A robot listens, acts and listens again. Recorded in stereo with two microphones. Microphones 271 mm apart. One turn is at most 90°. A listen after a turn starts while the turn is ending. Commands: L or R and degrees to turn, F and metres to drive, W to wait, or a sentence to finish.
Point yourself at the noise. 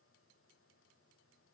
W
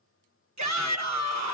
R90
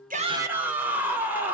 Facing the shout, 1 to 2 m away.